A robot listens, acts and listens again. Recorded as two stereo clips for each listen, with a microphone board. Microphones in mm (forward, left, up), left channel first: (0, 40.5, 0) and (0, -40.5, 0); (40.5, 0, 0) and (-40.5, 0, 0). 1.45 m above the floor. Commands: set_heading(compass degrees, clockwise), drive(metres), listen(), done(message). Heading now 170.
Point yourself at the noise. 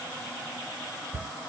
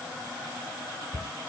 set_heading(190)
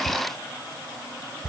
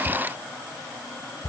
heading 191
done("Facing the cupboard door.")